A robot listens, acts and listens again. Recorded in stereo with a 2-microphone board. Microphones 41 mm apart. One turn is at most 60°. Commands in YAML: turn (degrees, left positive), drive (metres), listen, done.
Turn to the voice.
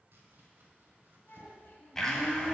turn: 50
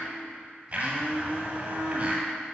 listen: true
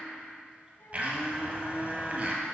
listen: true
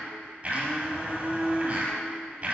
done: "I heard a child speaking, but can't make it out now. It was about straight ahead or 80° left."